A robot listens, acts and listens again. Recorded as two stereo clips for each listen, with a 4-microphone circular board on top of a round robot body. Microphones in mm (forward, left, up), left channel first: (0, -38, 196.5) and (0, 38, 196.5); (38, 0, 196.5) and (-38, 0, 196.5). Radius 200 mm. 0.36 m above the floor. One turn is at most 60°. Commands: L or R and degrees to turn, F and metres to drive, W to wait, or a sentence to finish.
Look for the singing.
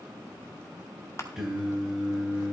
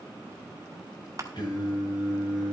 L10
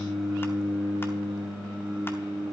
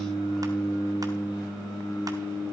Found it: singing, straight ahead, over 4 m away.